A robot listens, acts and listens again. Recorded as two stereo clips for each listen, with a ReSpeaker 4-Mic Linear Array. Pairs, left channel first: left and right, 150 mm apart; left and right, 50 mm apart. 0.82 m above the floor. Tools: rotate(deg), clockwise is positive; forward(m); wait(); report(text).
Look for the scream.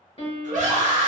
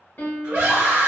rotate(55)
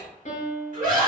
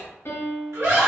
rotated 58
rotate(65)
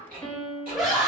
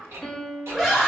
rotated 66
report("Facing the scream, 1 to 2 m away.")